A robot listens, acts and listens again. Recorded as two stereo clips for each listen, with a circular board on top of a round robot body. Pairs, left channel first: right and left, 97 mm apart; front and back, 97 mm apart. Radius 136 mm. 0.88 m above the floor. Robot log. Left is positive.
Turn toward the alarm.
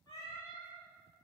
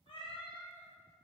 cmd idle
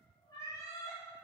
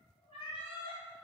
cmd idle
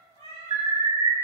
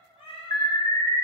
note: The alarm: 50° left.
cmd yaw +50
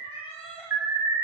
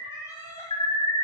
note: The alarm is now 25° left.
cmd yaw +25
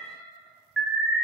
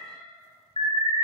end: Facing the alarm.